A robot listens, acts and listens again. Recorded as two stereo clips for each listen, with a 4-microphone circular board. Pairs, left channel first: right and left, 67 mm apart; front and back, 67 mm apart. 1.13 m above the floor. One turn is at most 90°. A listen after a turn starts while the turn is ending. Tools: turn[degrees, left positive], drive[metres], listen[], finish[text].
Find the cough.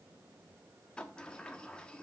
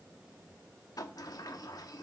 Action: listen[]
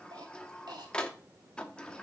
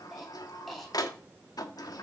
Thought: The cough: 90° left.
Action: turn[90]
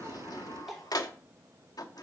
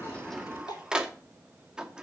Action: finish[Facing the cough, 2 to 4 m away.]